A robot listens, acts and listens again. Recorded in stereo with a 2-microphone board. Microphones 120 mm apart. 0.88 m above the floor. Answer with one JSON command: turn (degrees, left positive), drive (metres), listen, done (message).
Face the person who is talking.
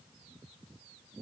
{"listen": true}
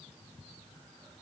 {"listen": true}
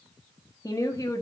{"turn": 30}
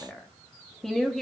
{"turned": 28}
{"done": "Found it: a woman speaking, straight ahead, 1 to 2 m away."}